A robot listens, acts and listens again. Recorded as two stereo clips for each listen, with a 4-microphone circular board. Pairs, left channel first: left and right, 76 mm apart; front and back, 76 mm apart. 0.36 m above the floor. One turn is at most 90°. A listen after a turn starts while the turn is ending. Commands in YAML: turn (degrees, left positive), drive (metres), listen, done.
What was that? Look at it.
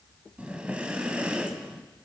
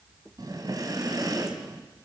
turn: -90
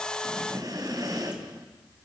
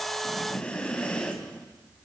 turn: -75
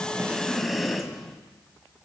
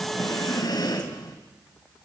done: "Facing the breathing, 2 to 4 m away."